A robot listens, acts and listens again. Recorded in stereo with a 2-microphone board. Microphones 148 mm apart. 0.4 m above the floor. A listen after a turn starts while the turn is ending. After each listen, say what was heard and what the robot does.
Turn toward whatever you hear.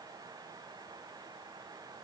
Keep listening.
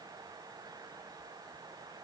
Keep listening.
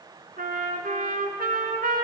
Turn 90° right.
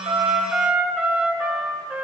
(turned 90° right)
So it is at 10° right. Turn 10° right.
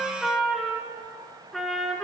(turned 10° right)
Found it: a trumpet, straight ahead.